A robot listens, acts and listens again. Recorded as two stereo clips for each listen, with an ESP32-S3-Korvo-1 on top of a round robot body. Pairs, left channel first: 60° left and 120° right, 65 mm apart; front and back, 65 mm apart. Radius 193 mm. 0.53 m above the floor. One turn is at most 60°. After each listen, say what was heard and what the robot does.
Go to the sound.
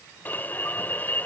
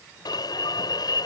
Drive 1.0 m forward.
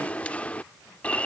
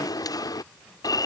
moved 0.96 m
The alarm is now 10° right. Turn 10° right.
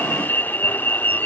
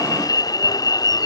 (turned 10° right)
Drive 1.0 m forward.
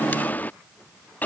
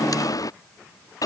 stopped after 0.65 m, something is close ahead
I am next to the alarm.